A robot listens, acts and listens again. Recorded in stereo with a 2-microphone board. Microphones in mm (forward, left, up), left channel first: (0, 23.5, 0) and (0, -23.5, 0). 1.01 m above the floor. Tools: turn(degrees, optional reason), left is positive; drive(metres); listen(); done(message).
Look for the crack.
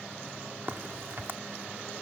turn(degrees=-55, reason="The crack: about 55° right or 125° right.")
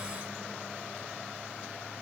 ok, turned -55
listen()
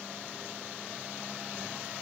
done("I heard a crack, but can't make it out now. It was about straight ahead or 70° right.")